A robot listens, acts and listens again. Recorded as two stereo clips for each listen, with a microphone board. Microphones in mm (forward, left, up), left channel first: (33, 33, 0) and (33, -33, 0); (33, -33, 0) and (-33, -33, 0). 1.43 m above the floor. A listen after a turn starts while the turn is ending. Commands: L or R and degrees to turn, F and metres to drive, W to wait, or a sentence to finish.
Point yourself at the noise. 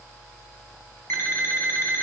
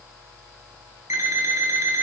L140
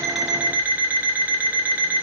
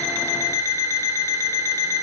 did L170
R30
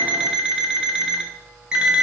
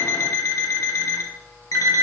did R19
R10
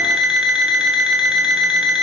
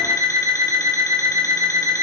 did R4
R10
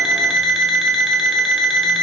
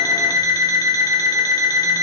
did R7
Found it: an alarm clock, straight ahead, 1 to 2 m away.